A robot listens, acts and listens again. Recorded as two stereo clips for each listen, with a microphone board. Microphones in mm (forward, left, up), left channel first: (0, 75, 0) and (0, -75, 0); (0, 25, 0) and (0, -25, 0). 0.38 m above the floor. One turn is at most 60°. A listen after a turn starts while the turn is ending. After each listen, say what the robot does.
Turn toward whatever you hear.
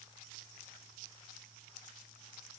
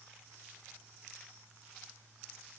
Keep listening.
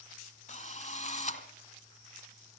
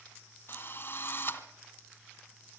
Turn 55° left.
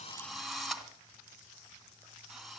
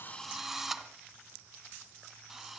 Found it: a drill, straight ahead.